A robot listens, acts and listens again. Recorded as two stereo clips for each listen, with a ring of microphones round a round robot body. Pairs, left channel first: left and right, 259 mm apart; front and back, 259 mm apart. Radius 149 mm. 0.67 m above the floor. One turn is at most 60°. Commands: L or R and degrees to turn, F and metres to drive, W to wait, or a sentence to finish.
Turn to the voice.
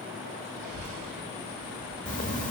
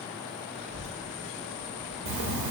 R60
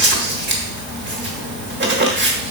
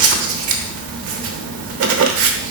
R60
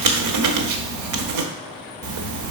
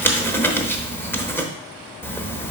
R50
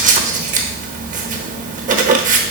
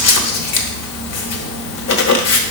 W
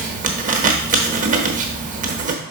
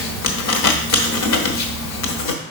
W
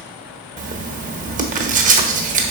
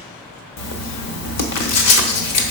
Found it: a child speaking, straight ahead.